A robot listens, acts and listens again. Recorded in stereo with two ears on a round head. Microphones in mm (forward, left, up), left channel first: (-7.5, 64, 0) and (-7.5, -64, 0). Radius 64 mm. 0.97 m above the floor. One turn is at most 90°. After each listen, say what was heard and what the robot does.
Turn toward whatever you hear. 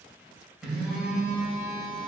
Turn 30° right.
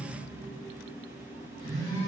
So it is at 25° left. Turn 25° left.
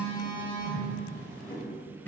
The phone buzzing is now 15° left. Turn 15° left.
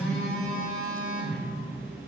Facing the phone buzzing, 2 to 4 m away.